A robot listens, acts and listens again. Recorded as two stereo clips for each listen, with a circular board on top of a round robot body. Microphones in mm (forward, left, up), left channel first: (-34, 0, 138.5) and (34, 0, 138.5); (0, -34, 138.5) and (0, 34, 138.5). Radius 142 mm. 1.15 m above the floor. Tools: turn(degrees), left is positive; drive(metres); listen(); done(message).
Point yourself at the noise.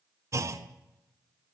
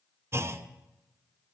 turn(degrees=45)
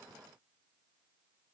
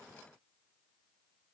done("I heard a clunk from this way, but can't make it out now.")